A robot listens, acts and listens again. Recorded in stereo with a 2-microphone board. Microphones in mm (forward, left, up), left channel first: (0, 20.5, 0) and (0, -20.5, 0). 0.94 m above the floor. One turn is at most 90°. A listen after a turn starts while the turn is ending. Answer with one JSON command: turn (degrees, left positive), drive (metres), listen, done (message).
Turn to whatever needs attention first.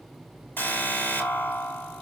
{"turn": 60}
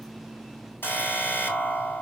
{"turn": 60}
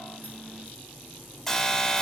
{"done": "Found it: an alarm, straight ahead, 2 to 4 m away."}